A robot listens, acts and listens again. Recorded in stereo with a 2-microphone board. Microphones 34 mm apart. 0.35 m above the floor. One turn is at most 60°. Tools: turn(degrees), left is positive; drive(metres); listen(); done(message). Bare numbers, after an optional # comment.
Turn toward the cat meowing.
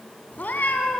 # The cat meowing: about 65° left or 115° left.
turn(60)
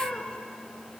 # So it is at 35° left.
turn(35)
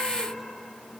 listen()
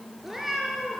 # The cat meowing is now 10° right.
turn(-10)
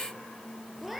done("Found it: a cat meowing, straight ahead.")